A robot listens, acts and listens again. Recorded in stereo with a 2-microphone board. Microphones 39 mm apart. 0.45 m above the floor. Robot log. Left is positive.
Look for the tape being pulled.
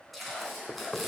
cmd yaw +30
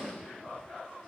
cmd idle
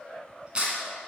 note: So it is at 30° right.
cmd yaw -30
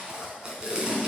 note: The tape being pulled is now 20° right.
cmd yaw -20
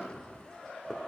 cmd idle
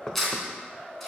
end: Found it: tape being pulled, straight ahead.